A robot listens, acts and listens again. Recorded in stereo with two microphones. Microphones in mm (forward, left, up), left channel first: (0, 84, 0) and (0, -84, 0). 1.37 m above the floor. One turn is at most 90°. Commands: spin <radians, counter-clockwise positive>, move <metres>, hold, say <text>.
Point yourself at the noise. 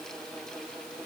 hold
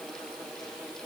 hold
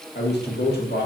spin 1.31
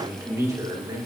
spin -0.44
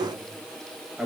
say Found it: a man speaking, straight ahead.